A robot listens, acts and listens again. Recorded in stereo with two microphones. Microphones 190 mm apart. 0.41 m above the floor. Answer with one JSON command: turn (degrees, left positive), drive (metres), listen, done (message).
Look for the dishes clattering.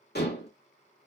{"turn": 60}
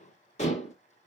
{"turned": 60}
{"turn": 45}
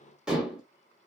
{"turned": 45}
{"done": "Found it: dishes clattering, straight ahead, 1 to 2 m away."}